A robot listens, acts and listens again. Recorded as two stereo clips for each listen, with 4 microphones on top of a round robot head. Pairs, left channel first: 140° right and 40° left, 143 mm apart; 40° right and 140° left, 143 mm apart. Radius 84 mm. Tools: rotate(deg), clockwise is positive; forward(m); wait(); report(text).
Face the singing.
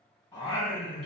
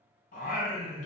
rotate(60)
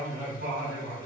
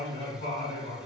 rotate(-20)
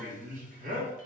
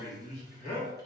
rotate(-10)
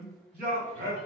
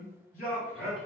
report("Found it: singing, straight ahead.")